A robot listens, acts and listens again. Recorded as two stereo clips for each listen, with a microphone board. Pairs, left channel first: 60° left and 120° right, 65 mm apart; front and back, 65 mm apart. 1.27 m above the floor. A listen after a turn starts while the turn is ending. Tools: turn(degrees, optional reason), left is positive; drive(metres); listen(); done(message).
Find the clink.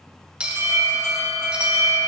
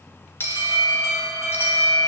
turn(degrees=-50, reason="The clink: 50° right.")
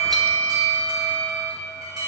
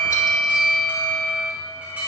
listen()
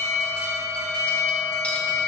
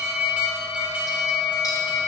listen()
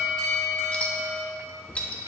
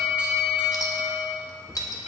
turn(degrees=-10, reason="The clink is now 10° right.")
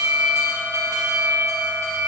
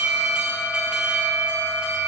listen()
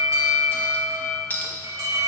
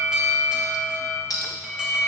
done("Facing the clink.")